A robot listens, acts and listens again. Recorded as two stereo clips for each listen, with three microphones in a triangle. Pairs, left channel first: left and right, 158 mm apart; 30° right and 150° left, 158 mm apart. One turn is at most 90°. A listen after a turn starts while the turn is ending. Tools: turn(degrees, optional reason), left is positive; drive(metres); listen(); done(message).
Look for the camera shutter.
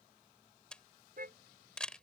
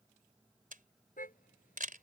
turn(degrees=90, reason="The camera shutter: 175° left.")
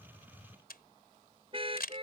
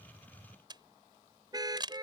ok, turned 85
turn(degrees=90, reason="The camera shutter is now 90° left.")
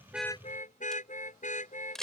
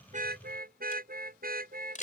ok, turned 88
done("Facing the camera shutter.")